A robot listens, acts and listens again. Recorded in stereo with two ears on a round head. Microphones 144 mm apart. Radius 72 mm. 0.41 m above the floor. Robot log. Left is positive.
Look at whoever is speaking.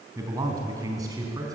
note: The man speaking: about 25° right or 155° right.
cmd yaw -25
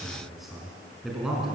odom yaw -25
end: Facing the man speaking, over 4 m away.